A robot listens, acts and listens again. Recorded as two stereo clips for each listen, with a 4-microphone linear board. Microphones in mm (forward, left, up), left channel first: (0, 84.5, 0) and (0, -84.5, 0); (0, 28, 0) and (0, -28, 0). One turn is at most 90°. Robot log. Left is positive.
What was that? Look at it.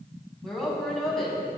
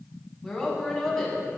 cmd yaw +30
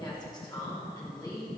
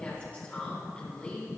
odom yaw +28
note: So it is at 155° left.
cmd yaw +90
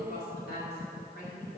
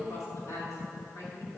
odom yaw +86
note: The woman speaking is now 70° left.
cmd yaw +70
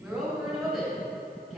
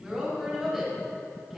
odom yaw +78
end: Facing the woman speaking.